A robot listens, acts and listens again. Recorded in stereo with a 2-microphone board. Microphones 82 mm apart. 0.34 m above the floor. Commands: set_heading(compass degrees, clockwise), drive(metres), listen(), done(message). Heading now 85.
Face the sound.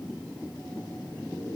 listen()
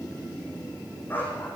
set_heading(60)
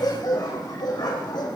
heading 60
set_heading(295)
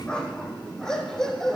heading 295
done("Found it: a dog barking, straight ahead.")